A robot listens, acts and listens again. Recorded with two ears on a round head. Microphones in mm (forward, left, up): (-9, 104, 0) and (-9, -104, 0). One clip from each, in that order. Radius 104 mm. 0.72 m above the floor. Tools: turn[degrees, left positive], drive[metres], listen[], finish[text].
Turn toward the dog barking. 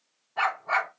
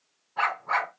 Thought: The dog barking: about 20° left or 160° left.
Action: turn[20]
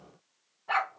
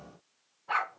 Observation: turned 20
Thought: So it is at 140° left.
Action: turn[140]
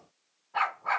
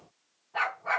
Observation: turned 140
Thought: The dog barking is now 15° left.
Action: turn[15]
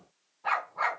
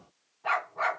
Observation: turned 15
Action: finish[Found it: a dog barking, straight ahead.]